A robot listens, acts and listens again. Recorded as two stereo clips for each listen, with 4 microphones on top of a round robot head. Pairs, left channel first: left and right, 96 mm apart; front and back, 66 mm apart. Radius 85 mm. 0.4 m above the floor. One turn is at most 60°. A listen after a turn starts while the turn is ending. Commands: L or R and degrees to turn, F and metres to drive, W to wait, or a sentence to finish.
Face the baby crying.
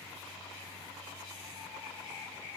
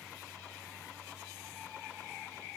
W
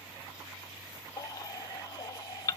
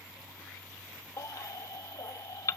L35
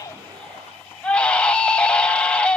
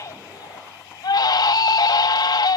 L10
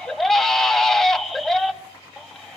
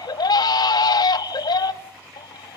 Facing the baby crying, 1 to 2 m away.